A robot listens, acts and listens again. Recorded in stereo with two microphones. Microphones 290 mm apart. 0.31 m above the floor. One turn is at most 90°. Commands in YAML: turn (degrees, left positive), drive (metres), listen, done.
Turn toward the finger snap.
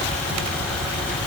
listen: true
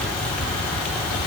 listen: true
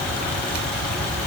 done: "I can't make out a finger snap to turn to."